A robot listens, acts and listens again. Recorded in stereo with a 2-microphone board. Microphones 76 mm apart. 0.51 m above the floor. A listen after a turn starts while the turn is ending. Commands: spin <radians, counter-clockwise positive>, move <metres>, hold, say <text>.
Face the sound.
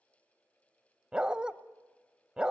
spin -0.52
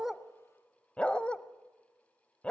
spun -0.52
spin 0.26
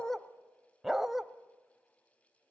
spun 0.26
say Found it: a dog barking, straight ahead, under 1 m away.